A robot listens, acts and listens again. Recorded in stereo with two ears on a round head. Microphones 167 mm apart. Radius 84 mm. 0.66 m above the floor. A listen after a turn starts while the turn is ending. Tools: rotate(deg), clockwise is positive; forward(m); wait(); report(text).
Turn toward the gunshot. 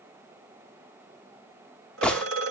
rotate(-30)
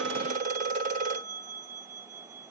wait()
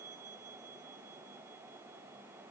report("I heard a gunshot, but can't make it out now. It was about 25° right or 145° left.")